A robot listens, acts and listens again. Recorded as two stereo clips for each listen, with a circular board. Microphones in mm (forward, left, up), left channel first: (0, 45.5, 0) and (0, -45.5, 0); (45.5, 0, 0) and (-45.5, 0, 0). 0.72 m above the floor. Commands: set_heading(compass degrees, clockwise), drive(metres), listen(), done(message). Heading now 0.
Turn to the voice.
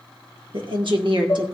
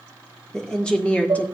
set_heading(70)
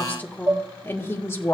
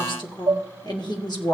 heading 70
set_heading(35)
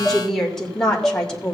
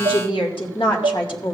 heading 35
set_heading(25)
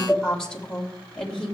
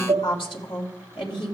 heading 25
done("Found it: a woman speaking, straight ahead, 2 to 4 m away.")